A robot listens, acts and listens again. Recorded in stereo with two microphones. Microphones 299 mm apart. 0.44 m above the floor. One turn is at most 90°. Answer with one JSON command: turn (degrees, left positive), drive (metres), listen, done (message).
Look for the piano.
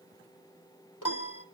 {"turn": 75}
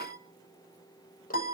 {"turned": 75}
{"turn": 25}
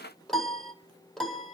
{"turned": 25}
{"done": "Found it: a piano, straight ahead, 2 to 4 m away."}